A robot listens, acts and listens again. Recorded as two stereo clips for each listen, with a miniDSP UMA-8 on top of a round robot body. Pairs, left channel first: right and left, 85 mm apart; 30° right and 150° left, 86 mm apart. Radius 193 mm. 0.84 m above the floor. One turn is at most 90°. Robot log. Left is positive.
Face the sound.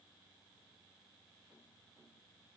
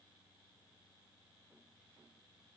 cmd idle
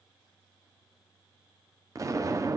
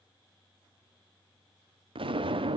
note: The explosion: 140° left.
cmd yaw +90
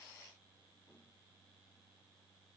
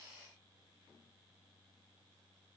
note: Nothing new. It was at 50° left.
cmd yaw +50
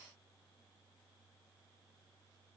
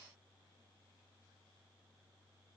end: Facing where the explosion came from. I can't hear it now.